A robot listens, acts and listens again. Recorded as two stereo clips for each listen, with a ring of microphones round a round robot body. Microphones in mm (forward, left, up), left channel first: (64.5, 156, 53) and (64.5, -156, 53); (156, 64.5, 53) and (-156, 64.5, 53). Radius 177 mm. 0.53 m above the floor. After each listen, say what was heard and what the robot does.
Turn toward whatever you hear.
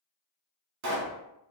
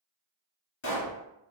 The pop: 55° right. Turn 55° right.
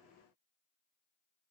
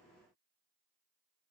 Facing where the pop came from. I can't hear it now.